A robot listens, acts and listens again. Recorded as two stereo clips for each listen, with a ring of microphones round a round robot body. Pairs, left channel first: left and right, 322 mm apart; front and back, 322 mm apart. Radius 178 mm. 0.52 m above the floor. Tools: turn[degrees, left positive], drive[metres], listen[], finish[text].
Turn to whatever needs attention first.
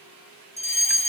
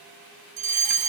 Thought: The fire alarm: 160° left.
Action: turn[160]
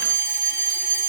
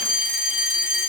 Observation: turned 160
Thought: The fire alarm is now 20° right.
Action: turn[-20]
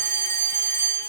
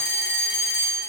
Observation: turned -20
Action: finish[Facing the fire alarm.]